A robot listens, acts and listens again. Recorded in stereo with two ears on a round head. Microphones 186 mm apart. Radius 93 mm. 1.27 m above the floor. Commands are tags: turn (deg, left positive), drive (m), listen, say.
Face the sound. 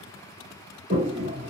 <turn deg="-30"/>
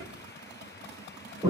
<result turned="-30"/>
<say>Facing the toilet flushing.</say>